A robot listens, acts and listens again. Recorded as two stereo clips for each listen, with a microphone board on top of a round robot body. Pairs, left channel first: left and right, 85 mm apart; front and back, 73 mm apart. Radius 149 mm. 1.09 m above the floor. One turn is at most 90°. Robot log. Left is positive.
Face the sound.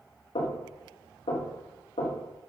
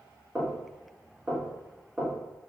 note: The knocking: 100° left.
cmd yaw +90
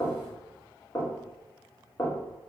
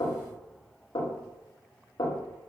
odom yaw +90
note: The knocking is now 30° left.
cmd yaw +30
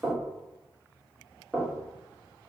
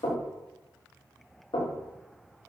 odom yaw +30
note: The knocking is now 10° right.
cmd yaw -10
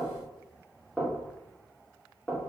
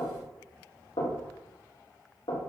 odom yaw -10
end: Found it: knocking, straight ahead.